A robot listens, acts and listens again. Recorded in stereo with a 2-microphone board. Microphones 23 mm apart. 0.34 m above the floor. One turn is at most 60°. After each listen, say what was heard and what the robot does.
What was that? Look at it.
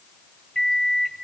The microwave: about 20° left or 160° left. Turn 20° left.
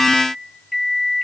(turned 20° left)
Facing the microwave.